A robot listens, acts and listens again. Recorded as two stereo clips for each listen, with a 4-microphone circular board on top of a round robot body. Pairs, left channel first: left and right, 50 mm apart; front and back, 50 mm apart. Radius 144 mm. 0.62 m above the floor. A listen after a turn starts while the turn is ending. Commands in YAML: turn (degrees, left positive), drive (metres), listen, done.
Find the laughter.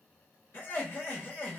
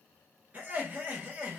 turn: 130
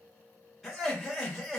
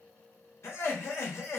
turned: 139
done: "Facing the laughter, 1 to 2 m away."